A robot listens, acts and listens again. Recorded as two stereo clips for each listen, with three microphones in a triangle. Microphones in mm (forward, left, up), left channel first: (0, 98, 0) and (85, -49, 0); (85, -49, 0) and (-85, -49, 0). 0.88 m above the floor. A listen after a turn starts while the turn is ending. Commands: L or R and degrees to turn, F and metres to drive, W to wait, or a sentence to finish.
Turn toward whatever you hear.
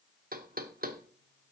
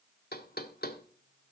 R25
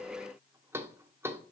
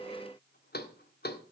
L15
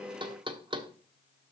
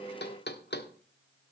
Found it: knocking, straight ahead, 1 to 2 m away.